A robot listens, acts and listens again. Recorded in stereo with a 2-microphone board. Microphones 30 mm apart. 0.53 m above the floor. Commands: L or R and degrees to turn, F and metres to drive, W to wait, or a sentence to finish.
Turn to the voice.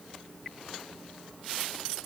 W
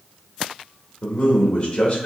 L35
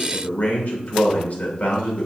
L100
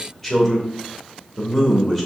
L15
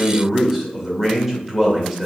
Found it: a man speaking, straight ahead.